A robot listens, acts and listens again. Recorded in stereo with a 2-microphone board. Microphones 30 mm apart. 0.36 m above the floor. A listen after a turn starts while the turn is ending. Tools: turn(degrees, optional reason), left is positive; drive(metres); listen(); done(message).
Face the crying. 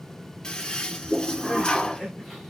turn(degrees=30)
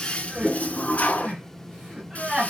turn(degrees=-30, reason="So it is at 30° right.")
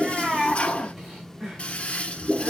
turn(degrees=-15, reason="The crying is now 15° right.")
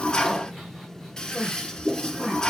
done("Facing the crying, over 4 m away.")